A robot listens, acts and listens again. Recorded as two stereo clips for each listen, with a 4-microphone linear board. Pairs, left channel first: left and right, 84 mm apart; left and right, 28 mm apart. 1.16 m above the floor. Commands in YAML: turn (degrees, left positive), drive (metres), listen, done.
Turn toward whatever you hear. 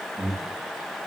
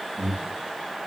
turn: -35
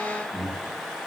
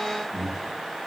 done: "Facing the breathing, 1 to 2 m away."